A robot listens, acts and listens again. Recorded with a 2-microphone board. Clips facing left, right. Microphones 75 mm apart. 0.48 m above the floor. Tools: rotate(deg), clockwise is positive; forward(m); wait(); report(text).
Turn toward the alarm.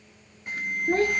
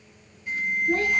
rotate(-55)
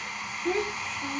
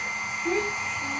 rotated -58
wait()
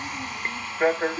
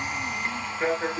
rotate(-35)
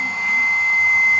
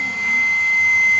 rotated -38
report("Facing the alarm, under 1 m away.")